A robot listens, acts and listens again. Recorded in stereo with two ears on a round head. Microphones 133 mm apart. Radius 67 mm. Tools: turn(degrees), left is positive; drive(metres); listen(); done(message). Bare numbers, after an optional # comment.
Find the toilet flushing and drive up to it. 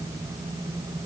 listen()
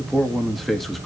listen()
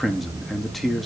done("I can't make out a toilet flushing to turn to.")